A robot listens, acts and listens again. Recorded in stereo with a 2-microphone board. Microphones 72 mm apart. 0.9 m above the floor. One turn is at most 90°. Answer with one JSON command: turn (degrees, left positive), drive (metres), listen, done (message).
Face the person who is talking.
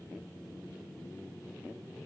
{"listen": true}
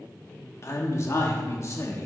{"turn": 40}
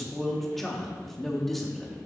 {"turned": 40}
{"done": "Found it: a man speaking, straight ahead, 1 to 2 m away."}